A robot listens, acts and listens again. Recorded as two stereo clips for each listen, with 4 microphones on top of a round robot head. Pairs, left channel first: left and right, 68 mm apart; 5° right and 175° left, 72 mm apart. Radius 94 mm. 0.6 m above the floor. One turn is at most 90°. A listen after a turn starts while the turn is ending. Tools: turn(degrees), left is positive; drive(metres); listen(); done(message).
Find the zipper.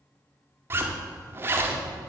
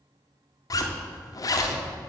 turn(degrees=-35)
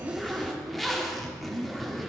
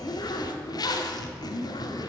done("Facing the zipper, 1 to 2 m away.")